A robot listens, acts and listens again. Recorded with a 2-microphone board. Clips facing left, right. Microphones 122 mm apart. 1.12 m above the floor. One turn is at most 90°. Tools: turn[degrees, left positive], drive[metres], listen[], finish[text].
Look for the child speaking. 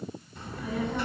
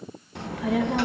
Thought: The child speaking: about 65° right or 115° right.
Action: turn[-65]
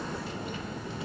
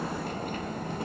Thought: So it is at 50° right.
Action: turn[-50]
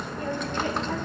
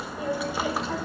Action: finish[Facing the child speaking, under 1 m away.]